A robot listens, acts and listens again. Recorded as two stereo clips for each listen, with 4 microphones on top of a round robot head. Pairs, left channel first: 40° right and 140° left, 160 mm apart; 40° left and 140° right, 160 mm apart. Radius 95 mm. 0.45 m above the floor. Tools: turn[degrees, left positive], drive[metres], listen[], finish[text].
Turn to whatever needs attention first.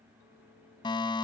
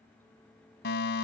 Thought: The fire alarm: 20° left.
Action: turn[20]
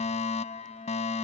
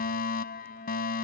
Thought: The fire alarm is now 10° left.
Action: turn[10]
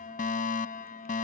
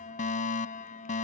Action: finish[Found it: a fire alarm, straight ahead.]